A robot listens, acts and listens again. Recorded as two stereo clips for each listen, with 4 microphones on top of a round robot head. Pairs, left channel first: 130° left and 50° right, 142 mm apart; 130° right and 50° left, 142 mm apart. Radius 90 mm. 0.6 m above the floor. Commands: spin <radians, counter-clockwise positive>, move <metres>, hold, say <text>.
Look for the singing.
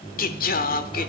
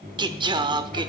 spin 1.92
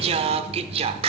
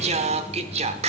say Facing the singing, under 1 m away.